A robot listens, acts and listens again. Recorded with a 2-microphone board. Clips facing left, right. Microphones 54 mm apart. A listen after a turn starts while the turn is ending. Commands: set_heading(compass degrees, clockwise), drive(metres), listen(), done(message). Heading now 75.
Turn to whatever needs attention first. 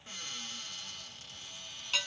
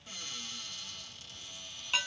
listen()
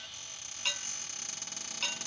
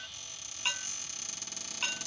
listen()
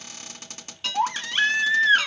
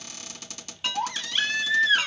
set_heading(45)
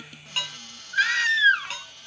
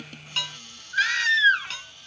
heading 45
set_heading(35)
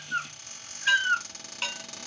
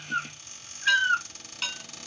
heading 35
done("Facing the baby crying.")